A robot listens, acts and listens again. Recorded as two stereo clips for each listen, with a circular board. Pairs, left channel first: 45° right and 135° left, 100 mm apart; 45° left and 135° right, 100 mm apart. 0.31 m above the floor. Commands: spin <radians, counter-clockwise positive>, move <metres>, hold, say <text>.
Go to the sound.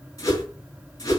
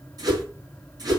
spin -1.66
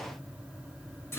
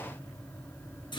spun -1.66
spin 0.26
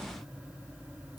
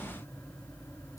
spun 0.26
hold
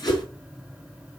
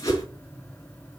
move 1.0
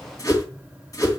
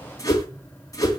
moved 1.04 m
move 1.0
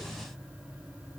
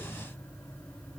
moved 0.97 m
hold
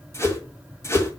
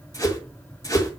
move 1.0
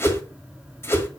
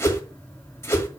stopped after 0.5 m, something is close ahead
say Arrived at the whoosh, straight ahead.